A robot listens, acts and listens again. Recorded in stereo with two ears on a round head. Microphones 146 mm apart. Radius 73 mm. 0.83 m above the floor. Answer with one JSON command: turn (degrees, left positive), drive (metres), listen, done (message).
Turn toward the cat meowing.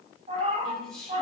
{"turn": -35}
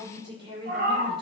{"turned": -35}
{"turn": -120}
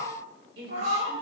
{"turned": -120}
{"turn": -50}
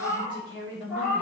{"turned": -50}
{"turn": -10}
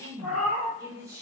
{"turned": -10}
{"done": "Found it: a cat meowing, straight ahead."}